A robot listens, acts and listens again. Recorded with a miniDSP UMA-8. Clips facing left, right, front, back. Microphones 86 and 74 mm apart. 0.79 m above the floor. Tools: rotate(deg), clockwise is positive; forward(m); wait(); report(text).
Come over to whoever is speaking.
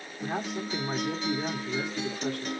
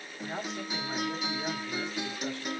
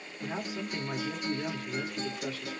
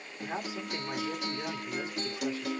rotate(-110)
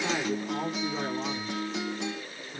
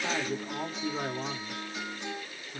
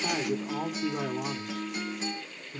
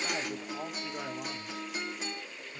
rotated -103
rotate(-10)
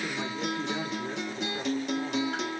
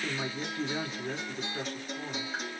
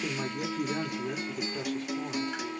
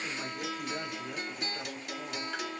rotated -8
forward(1.0)
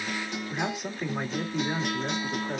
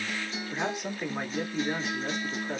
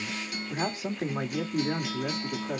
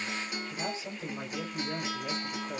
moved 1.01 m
forward(1.0)
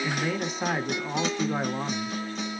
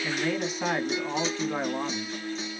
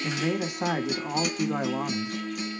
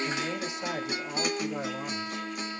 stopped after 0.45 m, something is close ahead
report("I am next to the man speaking.")